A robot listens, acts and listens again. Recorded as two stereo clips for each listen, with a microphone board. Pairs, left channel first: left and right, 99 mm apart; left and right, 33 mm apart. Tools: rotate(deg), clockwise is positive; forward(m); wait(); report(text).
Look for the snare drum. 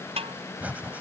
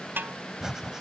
rotate(90)
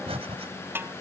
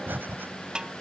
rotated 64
rotate(25)
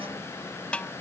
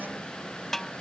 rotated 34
rotate(-10)
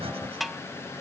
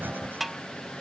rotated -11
report("Found it: a snare drum, straight ahead.")